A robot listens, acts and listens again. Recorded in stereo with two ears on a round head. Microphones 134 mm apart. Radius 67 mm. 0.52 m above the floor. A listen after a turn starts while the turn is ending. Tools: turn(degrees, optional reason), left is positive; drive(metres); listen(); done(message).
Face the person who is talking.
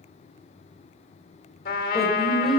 turn(degrees=30)
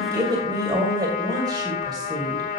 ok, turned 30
turn(degrees=-30, reason="So it is at 30° right.")
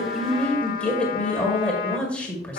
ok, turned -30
turn(degrees=10, reason="The woman speaking is now 10° left.")
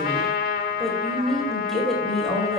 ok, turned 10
done("Facing the woman speaking.")